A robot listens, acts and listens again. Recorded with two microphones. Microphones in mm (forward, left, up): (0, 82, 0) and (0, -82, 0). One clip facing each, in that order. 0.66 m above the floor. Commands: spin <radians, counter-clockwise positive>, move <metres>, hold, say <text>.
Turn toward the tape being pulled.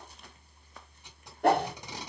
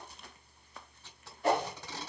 spin 0.52
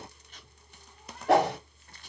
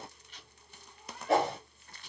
spin 2.36
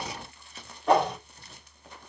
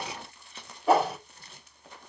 hold
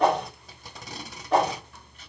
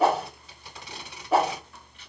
spin 0.70
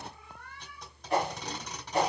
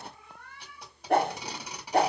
spin -0.17
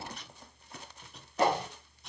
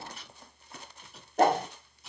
say Found it: tape being pulled, straight ahead, 1 to 2 m away.